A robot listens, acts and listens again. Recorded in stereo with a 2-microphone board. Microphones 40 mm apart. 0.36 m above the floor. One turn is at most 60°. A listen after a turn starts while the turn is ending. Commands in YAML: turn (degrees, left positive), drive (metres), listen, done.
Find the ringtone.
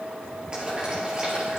listen: true
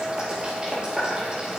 listen: true
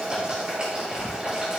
done: "I can't make out a ringtone to turn to."